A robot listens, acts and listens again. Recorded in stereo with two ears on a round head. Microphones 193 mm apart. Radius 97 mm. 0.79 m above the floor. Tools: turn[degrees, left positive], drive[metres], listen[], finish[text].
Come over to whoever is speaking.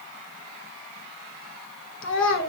Thought: The child speaking: about 60° left or 120° left.
Action: turn[60]
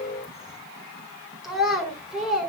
Action: drive[1.0]
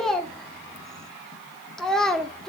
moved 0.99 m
Action: drive[1.0]
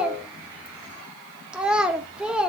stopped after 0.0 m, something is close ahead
Action: finish[I am next to the child speaking.]